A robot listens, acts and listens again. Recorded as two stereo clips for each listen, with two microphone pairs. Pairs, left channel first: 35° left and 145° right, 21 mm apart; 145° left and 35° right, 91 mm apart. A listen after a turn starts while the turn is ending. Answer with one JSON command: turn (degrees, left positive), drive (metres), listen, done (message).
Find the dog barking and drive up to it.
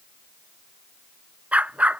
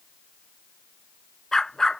{"turn": -135}
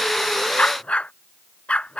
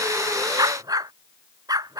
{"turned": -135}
{"turn": 10}
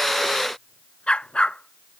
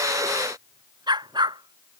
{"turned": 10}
{"drive": 1.0}
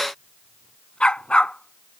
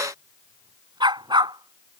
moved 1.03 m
{"drive": 1.0}
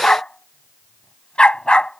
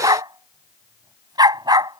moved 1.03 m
{"drive": 1.0}
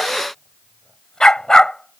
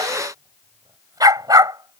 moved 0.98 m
{"turn": -10}
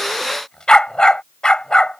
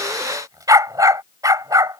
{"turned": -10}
{"drive": 1.0}
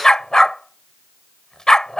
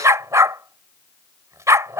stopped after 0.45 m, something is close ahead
{"done": "Arrived at the dog barking, straight ahead."}